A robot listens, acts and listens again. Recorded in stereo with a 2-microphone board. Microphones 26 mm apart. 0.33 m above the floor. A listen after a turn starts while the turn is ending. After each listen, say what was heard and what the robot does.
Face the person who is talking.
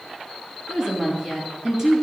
The woman speaking: about 20° right or 160° right. Turn 20° right.
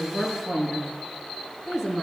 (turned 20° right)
Turn 30° right.
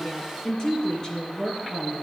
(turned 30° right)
So it is at 20° left. Turn 20° left.
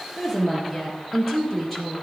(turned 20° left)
Facing the woman speaking.